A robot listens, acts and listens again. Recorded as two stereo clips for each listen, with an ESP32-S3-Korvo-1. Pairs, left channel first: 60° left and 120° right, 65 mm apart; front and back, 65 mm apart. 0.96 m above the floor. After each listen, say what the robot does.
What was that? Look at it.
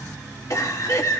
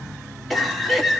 Turn 90° left.
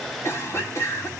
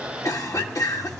Turn 20° left.
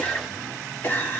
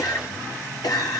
Facing the cough.